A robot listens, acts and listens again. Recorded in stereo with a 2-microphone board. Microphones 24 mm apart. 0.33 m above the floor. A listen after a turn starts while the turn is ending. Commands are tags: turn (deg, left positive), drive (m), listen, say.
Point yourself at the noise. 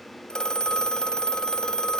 <turn deg="35"/>
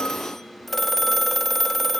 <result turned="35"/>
<turn deg="10"/>
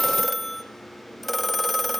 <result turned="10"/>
<say>Found it: a phone ringing, straight ahead.</say>